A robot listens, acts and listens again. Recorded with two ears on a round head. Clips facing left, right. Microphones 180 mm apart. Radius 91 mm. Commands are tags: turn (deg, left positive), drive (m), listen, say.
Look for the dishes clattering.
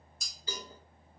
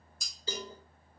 <turn deg="-90"/>
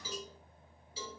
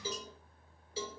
<listen/>
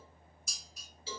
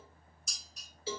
<say>Facing the dishes clattering.</say>